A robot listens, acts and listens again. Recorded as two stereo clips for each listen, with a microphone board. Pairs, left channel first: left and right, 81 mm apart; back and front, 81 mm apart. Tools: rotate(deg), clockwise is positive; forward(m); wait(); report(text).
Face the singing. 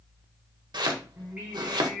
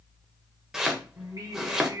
report("Facing the singing, 1 to 2 m away.")